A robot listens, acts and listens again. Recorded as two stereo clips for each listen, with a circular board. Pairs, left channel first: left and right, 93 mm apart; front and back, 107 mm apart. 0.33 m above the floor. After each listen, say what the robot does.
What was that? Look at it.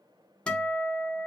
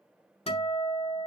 Turn 10° left.
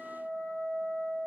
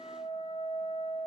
Found it: a guitar, straight ahead, under 1 m away.